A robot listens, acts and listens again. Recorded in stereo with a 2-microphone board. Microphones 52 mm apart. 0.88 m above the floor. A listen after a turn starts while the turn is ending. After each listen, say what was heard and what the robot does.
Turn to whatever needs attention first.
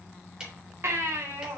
The baby crying: about 55° right or 125° right. Turn 55° right.
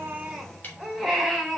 Facing the baby crying.